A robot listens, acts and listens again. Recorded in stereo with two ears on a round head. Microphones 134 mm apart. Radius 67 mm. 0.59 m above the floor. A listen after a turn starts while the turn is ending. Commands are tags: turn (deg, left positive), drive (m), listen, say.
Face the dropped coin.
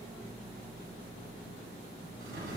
<listen/>
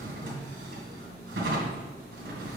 <listen/>
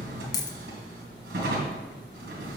<turn deg="25"/>
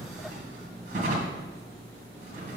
<listen/>
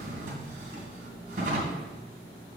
<say>I heard a dropped coin, but can't make it out now. It was about straight ahead or 130° left.</say>